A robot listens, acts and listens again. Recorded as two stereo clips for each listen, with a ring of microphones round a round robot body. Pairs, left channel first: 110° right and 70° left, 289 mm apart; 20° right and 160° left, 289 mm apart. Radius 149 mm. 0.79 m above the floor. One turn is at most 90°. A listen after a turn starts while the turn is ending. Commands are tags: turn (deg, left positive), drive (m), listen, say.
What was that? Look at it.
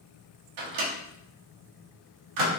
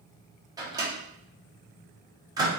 <turn deg="80"/>
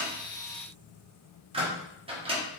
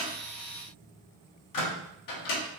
<say>Facing the microwave, 1 to 2 m away.</say>